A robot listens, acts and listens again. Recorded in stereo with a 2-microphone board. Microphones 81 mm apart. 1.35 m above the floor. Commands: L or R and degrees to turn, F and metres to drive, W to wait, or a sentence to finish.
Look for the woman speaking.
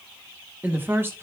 R30
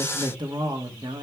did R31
R100
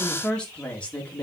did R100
L15
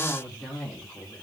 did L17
Facing the woman speaking, 2 to 4 m away.